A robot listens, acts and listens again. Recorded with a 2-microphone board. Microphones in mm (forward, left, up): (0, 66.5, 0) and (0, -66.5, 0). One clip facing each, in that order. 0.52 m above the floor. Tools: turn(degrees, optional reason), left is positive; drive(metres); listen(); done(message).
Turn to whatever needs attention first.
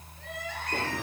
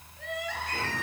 turn(degrees=-75, reason="The crying: about 75° right or 105° right.")
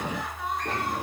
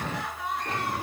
done("Facing the crying, 2 to 4 m away.")